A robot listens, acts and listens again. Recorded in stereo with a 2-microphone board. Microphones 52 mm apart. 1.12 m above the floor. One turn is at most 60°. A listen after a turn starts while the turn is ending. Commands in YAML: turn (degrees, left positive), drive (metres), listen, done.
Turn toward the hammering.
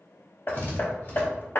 turn: 45
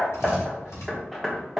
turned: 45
done: "Found it: hammering, straight ahead."